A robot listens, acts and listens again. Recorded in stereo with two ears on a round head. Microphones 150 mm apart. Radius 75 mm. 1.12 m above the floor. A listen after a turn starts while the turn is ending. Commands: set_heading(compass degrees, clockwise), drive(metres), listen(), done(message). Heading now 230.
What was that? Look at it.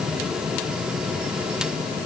listen()
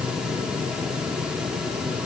listen()
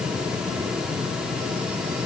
done("I can't make out anything.")